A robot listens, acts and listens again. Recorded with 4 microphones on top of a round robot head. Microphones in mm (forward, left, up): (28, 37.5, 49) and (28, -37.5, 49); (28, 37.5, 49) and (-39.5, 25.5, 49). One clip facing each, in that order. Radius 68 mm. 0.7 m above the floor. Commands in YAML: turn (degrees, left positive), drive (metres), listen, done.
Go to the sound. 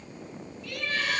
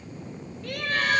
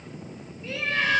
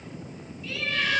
turn: -55
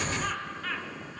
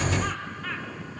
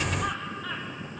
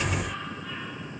drive: 1.0
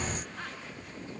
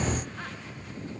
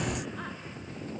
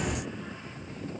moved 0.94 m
listen: true
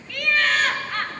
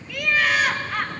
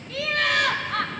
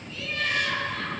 drive: 1.0
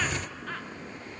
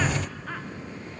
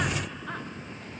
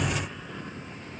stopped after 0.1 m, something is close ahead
listen: true
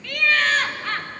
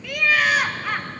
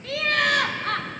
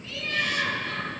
turn: -10
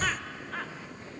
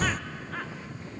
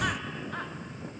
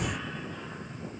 listen: true
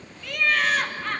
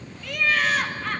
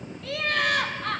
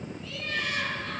done: "I am next to the laughter."